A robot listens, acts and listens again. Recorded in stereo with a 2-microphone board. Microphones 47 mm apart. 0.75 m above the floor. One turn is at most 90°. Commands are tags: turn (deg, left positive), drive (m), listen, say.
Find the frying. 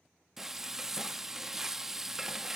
<turn deg="-30"/>
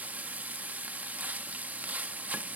<turn deg="-90"/>
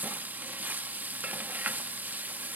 <turn deg="-45"/>
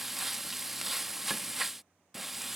<say>Found it: frying, straight ahead.</say>